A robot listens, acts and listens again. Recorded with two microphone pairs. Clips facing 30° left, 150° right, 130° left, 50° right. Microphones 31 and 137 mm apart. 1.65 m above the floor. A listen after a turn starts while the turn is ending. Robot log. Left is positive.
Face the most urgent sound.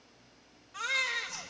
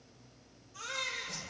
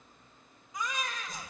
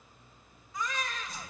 note: The baby crying: 60° left.
cmd yaw +60
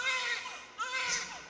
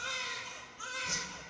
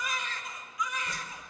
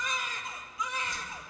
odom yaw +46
note: The baby crying is now 10° left.
cmd yaw +10
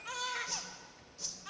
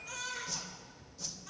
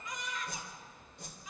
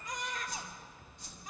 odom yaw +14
end: Facing the baby crying.